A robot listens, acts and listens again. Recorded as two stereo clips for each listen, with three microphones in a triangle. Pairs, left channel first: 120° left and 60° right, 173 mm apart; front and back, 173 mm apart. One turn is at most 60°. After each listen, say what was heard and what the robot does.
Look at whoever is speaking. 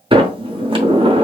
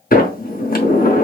Keep listening.
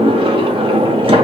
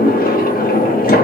Keep listening.
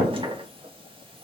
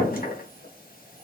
I can't make out anyone speaking, only a sliding door.